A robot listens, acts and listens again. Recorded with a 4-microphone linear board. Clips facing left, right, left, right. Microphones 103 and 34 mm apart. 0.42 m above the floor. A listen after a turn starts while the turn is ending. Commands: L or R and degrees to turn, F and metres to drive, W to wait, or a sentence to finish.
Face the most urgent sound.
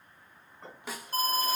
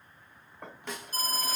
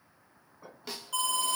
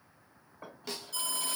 L50
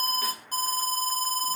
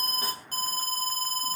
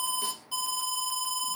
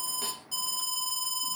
L15
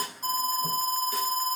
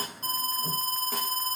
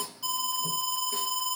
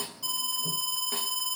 Found it: an alarm, straight ahead, 1 to 2 m away.